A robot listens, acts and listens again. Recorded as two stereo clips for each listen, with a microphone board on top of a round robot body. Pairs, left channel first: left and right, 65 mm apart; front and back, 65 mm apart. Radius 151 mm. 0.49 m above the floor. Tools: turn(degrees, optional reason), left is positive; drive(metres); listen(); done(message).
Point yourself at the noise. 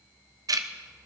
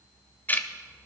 turn(degrees=-65, reason="The ticking: 65° right.")
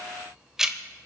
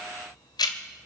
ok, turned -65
turn(degrees=-10, reason="The ticking is now 10° right.")
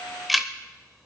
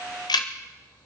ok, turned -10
done("Facing the ticking, under 1 m away.")